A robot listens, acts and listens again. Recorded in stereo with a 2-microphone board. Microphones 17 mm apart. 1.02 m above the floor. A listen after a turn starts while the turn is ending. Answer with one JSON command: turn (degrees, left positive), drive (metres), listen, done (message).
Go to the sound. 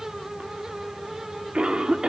{"turn": -90}
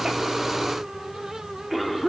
{"drive": 1.0}
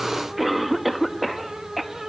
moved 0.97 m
{"drive": 1.0}
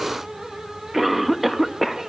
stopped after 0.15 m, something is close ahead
{"done": "I am next to the cough."}